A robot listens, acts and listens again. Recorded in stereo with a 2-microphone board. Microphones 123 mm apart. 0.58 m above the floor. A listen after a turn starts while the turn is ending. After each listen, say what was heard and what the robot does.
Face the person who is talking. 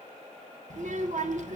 The child speaking: about 70° right or 110° right. Turn 70° right.
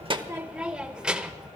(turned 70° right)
Facing the child speaking, 1 to 2 m away.